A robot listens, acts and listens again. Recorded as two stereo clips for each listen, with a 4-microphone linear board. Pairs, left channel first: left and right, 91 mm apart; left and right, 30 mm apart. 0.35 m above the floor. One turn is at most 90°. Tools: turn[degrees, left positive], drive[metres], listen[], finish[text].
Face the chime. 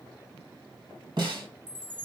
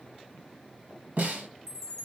Action: turn[30]
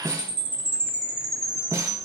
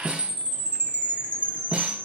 Thought: So it is at 135° left.
Action: turn[90]
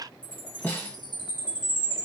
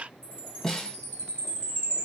Thought: The chime is now 70° left.
Action: turn[70]
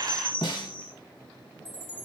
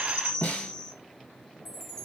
Thought: The chime is now 20° left.
Action: turn[20]
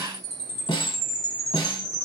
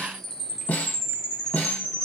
Thought: The chime is now 10° left.
Action: turn[10]
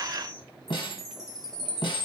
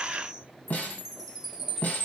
Action: finish[Facing the chime, 1 to 2 m away.]